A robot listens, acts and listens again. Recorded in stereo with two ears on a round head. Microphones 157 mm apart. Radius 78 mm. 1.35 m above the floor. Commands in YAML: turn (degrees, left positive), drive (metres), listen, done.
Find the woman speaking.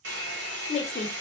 turn: 35
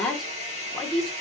done: "Facing the woman speaking, under 1 m away."